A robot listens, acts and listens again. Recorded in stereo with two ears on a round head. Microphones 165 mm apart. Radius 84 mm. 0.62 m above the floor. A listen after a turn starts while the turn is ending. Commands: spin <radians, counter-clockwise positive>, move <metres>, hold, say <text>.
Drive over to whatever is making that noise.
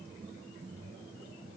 hold
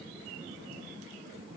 hold
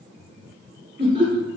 spin -0.70
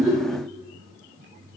hold
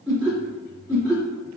move 1.0
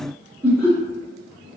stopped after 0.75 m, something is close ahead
say Arrived at the laughter, straight ahead.